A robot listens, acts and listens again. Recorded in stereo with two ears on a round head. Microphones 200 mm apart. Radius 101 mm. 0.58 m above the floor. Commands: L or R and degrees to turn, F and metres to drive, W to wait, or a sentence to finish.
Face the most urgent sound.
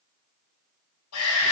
L90
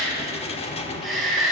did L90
Facing the shout.